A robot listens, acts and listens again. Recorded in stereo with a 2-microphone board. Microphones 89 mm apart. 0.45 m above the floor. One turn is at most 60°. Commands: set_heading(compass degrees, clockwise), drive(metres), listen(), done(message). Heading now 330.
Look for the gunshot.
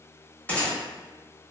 set_heading(315)
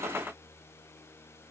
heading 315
listen()
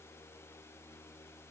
done("I heard a gunshot, but can't make it out now. It was about straight ahead or 150° left.")